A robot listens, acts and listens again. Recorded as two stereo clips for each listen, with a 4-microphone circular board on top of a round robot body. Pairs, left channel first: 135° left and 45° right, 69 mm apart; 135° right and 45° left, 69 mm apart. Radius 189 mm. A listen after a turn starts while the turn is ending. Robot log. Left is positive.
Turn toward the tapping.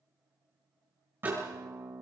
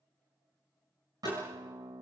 note: The tapping: 120° right.
cmd yaw -120
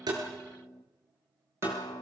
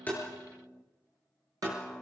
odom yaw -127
note: Nothing new. It was at 10° left.
cmd yaw +10
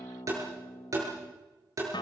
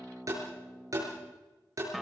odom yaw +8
end: Facing the tapping, over 4 m away.